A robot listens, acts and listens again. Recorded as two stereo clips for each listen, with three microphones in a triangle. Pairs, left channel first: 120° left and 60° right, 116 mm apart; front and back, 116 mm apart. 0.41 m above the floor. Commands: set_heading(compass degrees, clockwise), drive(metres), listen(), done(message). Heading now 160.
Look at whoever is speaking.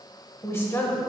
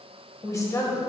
set_heading(105)
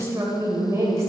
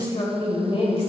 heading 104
done("Found it: a woman speaking, straight ahead.")